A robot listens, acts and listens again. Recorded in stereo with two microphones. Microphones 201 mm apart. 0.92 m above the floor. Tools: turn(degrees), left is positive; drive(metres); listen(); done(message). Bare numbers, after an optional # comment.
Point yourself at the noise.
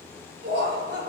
# The laughter: about 55° right or 125° right.
turn(-55)
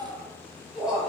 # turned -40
done("Found it: laughter, straight ahead.")